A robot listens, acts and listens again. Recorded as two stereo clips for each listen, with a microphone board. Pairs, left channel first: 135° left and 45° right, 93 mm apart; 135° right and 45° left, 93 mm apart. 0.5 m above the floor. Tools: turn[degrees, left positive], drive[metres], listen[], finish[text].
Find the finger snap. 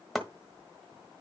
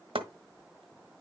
Action: listen[]
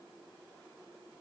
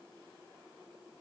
Action: listen[]
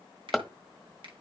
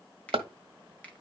Thought: The finger snap: 60° right.
Action: turn[-60]
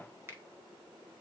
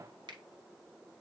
Thought: The finger snap is now 15° left.
Action: turn[15]
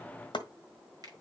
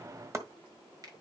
Action: finish[Found it: a finger snap, straight ahead.]